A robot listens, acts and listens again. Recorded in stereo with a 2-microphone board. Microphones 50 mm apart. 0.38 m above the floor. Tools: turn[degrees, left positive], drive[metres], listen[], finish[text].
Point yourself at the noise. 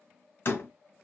Thought: The door slam: about 45° left or 135° left.
Action: turn[45]
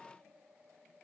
Action: listen[]
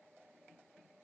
Action: finish[I heard a door slam, but can't make it out now. It was about straight ahead or 90° left.]